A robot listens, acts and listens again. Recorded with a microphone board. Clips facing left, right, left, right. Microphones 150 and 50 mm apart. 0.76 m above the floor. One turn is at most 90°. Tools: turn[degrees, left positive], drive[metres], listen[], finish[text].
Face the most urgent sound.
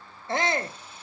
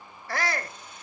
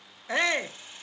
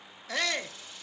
Thought: The shout: about 25° left or 155° left.
Action: turn[25]
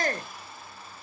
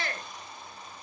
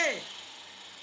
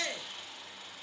Thought: So it is at 125° left.
Action: turn[90]
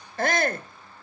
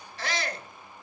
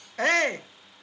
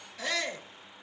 Thought: The shout is now 65° left.
Action: turn[65]
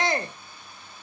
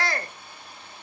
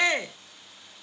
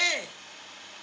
Thought: The shout is now 25° left.
Action: turn[25]
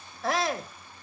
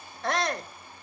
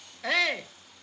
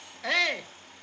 Action: finish[Found it: a shout, straight ahead.]